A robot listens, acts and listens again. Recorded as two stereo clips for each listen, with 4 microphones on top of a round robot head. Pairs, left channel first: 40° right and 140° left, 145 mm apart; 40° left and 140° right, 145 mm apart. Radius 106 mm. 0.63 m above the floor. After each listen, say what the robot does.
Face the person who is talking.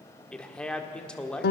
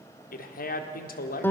Turn 45° left.
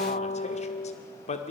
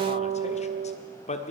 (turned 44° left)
Facing the man speaking, 1 to 2 m away.